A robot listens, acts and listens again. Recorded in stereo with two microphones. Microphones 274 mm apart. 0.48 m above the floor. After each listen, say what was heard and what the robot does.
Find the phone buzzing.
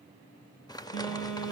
The phone buzzing: about 40° left or 140° left. Turn 40° left.
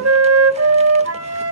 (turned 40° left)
Keep listening.
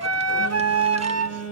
So it is at 95° left. Turn 95° left.
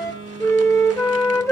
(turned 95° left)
The phone buzzing is now 15° left. Turn 15° left.
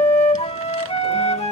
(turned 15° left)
Keep listening.
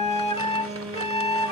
Found it: a phone buzzing, straight ahead.